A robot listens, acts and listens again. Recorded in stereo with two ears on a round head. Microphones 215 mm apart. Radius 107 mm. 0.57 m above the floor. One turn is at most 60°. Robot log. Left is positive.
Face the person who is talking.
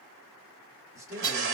cmd yaw -30
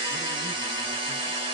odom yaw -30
cmd idle
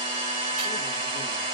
cmd idle
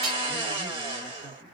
note: So it is at 15° left.
cmd yaw +15
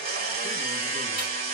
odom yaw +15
cmd idle
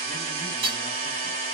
cmd idle
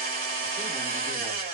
end: Facing where the man speaking came from. I can't hear it now.